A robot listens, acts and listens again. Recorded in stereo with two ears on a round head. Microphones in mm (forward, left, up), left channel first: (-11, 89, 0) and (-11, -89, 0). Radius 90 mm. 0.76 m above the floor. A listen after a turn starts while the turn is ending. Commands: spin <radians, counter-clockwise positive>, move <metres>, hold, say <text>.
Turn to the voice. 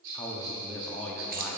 spin 0.52
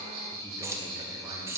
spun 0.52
hold
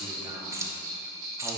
hold
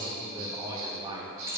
spin -0.35
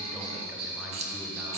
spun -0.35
hold
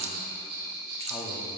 hold
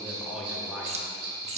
say Facing the man speaking, under 1 m away.